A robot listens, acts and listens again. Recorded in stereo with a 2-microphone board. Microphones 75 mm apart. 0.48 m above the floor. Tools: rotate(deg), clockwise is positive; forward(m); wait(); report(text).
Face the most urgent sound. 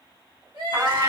rotate(75)
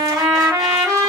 wait()
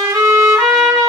wait()
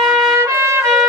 report("I heard crying, but can't make it out now. It was about straight ahead or 30° right.")